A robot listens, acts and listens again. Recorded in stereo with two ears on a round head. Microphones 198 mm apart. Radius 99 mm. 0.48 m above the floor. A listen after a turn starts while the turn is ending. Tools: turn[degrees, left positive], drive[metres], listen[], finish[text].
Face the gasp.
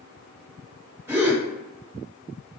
Action: turn[-30]
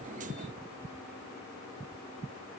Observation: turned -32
Action: listen[]
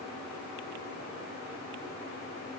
Action: finish[I heard a gasp, but can't make it out now. It was about 20° left or 135° right.]